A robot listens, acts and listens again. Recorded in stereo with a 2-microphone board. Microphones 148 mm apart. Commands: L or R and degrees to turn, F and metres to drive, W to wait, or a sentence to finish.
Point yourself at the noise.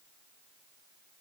W
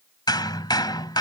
L30
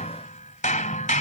L120
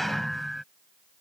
Found it: hammering, straight ahead.